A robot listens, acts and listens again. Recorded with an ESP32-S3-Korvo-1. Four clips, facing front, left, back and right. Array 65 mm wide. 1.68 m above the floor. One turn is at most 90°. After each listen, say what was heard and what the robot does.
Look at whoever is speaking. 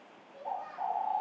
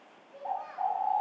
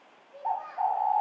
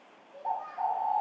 The child speaking: 150° left. Turn 90° left.
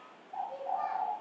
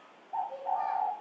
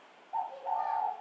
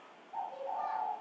The child speaking is now 85° left. Turn 85° left.
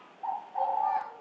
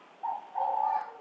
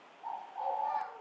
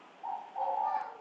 Keep listening.
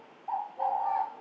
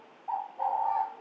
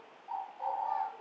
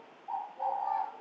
Keep listening.
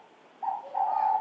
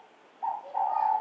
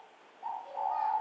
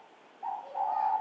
Facing where the child speaking came from. I can't hear it now.